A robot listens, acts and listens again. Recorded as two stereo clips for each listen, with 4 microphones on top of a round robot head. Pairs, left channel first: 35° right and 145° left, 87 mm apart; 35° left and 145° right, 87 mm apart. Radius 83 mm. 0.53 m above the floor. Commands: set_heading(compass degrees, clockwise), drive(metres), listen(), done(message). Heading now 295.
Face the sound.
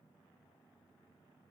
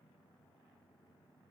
listen()
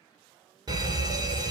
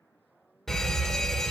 set_heading(175)
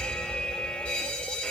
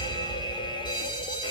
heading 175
set_heading(130)
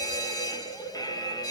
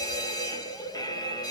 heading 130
done("Found it: a fire alarm, straight ahead.")